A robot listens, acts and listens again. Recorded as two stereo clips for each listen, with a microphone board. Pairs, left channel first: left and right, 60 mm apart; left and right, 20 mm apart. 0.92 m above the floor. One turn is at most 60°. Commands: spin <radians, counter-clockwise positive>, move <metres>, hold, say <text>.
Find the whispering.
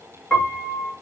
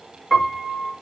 hold
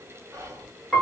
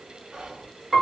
spin -1.05
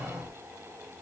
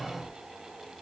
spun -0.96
spin -0.61
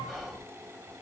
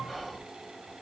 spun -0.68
say Found it: whispering, straight ahead, under 1 m away.